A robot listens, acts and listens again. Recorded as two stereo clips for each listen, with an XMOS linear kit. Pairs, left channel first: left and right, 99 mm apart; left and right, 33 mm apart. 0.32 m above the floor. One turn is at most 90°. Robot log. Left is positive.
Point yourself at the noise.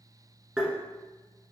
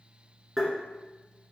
cmd yaw -30
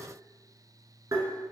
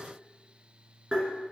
note: So it is at 145° right.
cmd yaw -90
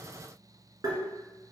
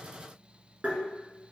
note: The tapping is now 40° right.
cmd yaw -40
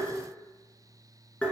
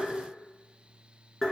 note: The tapping is now 15° left.
cmd yaw +15
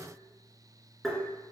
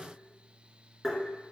end: Found it: tapping, straight ahead, under 1 m away.